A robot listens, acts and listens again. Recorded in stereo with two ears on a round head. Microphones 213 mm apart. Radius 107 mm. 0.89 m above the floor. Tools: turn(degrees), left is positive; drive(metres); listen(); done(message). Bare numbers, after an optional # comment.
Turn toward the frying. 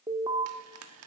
# The frying: about 70° right or 110° right.
turn(-70)
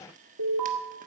listen()
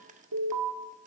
listen()
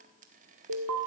done("I heard frying, but can't make it out now. It was about straight ahead or 40° right.")